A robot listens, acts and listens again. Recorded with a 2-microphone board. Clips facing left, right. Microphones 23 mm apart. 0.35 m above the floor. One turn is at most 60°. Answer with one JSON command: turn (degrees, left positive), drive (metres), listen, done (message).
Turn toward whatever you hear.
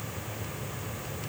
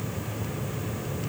{"listen": true}
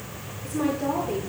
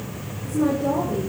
{"turn": 60}
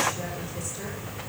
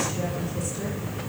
{"listen": true}
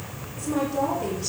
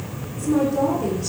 {"turn": 15}
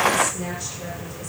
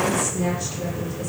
{"done": "Facing the woman speaking, over 4 m away."}